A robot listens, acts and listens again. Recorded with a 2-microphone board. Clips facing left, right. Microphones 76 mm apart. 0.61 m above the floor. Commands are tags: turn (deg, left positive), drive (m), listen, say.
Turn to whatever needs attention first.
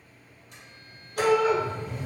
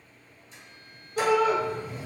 <turn deg="-30"/>
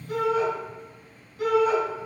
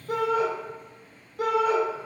<turn deg="-120"/>
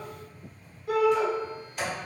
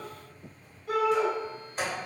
<say>Found it: a shout, straight ahead, 1 to 2 m away.</say>